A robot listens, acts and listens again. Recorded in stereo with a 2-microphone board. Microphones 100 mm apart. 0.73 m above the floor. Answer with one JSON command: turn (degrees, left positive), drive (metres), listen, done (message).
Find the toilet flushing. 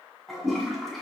{"turn": 30}
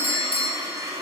{"turn": -30}
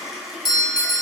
{"done": "Found it: a toilet flushing, straight ahead, 1 to 2 m away."}